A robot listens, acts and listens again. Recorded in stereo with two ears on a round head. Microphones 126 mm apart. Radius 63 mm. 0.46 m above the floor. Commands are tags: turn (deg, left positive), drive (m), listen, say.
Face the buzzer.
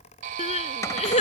<turn deg="-60"/>
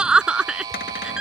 <turn deg="-30"/>
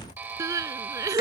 <turn deg="-15"/>
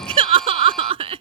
<listen/>
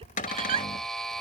<say>Facing the buzzer.</say>